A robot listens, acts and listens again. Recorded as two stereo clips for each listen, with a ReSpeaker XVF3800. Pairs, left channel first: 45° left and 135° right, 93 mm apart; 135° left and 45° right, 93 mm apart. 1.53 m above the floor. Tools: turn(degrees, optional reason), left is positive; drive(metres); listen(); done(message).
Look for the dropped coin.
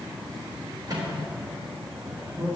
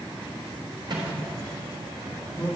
listen()
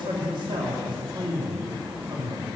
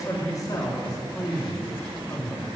listen()
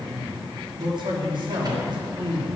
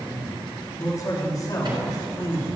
done("I can't make out a dropped coin to turn to.")